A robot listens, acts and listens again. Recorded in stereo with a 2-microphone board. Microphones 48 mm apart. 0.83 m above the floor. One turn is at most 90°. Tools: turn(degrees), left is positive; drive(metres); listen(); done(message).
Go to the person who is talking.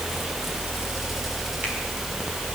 listen()
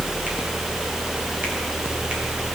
listen()
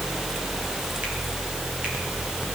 done("I can't make out anyone speaking.")